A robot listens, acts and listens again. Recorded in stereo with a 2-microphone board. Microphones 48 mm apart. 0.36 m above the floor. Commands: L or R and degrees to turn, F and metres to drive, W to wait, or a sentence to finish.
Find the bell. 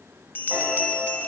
L45
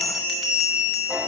Facing the bell.